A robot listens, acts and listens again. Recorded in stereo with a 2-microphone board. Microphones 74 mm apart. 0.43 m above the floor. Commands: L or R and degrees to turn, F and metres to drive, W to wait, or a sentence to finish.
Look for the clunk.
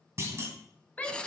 R40
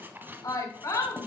W
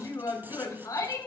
I heard a clunk, but can't make it out now. It was about straight ahead or 100° right.